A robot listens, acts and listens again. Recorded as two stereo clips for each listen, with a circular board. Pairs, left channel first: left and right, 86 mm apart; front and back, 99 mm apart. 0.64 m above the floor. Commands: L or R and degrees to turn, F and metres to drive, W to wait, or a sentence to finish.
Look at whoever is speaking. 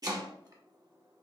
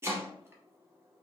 W
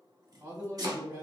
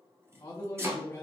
R55
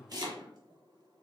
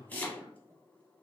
W
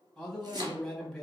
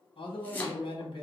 Facing the man speaking, under 1 m away.